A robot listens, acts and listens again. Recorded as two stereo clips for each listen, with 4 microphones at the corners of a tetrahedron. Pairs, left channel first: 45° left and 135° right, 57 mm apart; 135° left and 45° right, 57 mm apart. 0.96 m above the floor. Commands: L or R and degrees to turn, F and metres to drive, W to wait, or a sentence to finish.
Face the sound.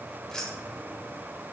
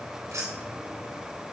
R35
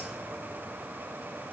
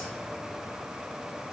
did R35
W
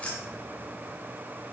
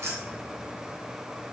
R20
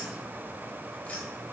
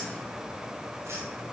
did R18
R15
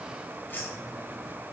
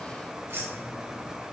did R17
Found it: keys jangling, straight ahead.